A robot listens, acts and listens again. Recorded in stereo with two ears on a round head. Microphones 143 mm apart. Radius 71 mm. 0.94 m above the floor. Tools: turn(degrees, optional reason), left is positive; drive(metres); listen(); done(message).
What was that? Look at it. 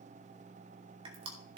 turn(degrees=-35, reason="The crushing: about 35° right or 145° right.")
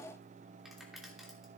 listen()
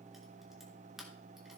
listen()
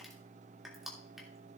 done("Found it: crushing, straight ahead.")